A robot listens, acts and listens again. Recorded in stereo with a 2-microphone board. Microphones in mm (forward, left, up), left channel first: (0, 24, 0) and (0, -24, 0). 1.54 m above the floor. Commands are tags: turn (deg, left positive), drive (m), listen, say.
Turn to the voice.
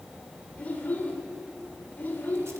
<turn deg="40"/>
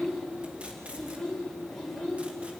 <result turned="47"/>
<say>Facing the child speaking.</say>